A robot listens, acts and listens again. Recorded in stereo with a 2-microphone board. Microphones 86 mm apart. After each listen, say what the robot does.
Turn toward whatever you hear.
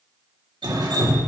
Turn 65° right.
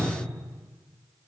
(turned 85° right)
Keep listening.
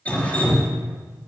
Turn 20° left.
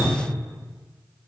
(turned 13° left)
Found it: dripping, straight ahead.